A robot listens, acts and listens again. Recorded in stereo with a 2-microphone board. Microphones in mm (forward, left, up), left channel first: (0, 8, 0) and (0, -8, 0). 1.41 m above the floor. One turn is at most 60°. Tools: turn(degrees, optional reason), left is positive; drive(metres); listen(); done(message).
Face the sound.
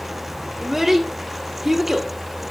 turn(degrees=-15, reason="The child speaking: about 15° right or 165° right.")
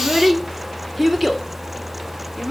done("Facing the child speaking.")